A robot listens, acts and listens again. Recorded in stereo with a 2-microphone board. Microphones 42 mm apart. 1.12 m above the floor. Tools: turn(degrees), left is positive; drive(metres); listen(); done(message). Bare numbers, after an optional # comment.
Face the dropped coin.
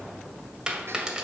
# The dropped coin: about 15° right or 165° right.
turn(-15)
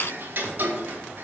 listen()
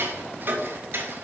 done("I heard a dropped coin, but can't make it out now. It was about straight ahead or 150° right.")